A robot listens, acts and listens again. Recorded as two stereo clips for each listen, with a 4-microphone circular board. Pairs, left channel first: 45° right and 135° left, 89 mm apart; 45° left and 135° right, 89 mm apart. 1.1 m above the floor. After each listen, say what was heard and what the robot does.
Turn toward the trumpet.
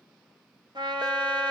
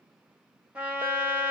The trumpet: 150° left. Turn 150° left.
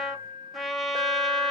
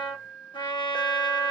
The trumpet is now 45° left. Turn 45° left.
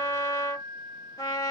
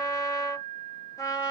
Facing the trumpet.